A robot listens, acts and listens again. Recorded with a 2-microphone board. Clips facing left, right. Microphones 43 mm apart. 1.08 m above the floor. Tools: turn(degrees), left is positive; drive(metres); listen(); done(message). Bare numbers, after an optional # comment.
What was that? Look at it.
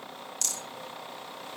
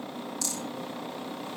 # The rattle: about 70° left or 110° left.
turn(70)
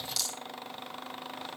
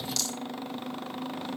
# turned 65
# So it is at 10° left.
turn(10)
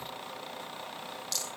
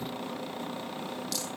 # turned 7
done("Found it: a rattle, straight ahead, 2 to 4 m away.")